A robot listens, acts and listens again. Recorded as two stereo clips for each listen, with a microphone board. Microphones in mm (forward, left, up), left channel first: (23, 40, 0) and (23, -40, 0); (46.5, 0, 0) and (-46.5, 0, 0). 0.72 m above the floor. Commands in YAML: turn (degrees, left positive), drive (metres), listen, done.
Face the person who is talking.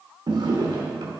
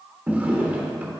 listen: true
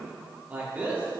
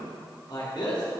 turn: -20
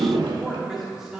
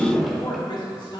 done: "Facing the man speaking."